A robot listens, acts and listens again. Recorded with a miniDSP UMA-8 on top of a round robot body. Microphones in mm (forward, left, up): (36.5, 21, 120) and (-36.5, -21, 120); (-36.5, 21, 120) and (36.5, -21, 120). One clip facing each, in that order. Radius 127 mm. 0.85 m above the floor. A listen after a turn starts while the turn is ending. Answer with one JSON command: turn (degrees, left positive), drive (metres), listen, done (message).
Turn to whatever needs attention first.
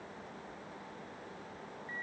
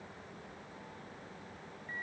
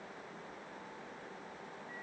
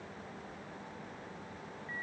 {"listen": true}
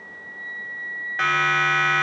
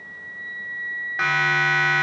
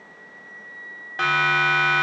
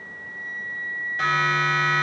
{"turn": 125}
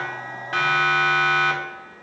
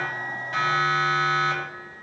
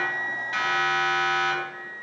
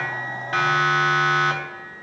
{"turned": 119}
{"done": "Found it: a siren, straight ahead."}